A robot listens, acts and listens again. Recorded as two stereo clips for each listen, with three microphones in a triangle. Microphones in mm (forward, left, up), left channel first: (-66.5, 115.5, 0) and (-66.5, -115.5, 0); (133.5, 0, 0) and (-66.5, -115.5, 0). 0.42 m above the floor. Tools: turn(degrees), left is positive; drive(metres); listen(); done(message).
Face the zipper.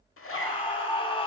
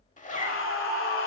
turn(degrees=80)
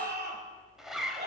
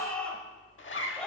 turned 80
done("Found it: a zipper, straight ahead.")